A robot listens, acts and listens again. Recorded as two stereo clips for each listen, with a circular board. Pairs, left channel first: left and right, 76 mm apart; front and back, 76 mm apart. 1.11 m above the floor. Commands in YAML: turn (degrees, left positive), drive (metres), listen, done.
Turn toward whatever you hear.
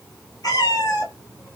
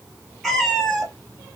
turn: 85
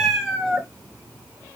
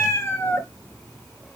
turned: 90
turn: -15
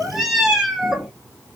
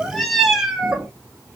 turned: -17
turn: -150
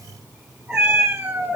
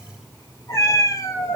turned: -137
turn: -25
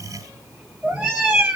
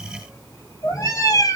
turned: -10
turn: -15
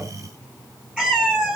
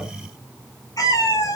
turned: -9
done: "Found it: a cat meowing, straight ahead, 1 to 2 m away."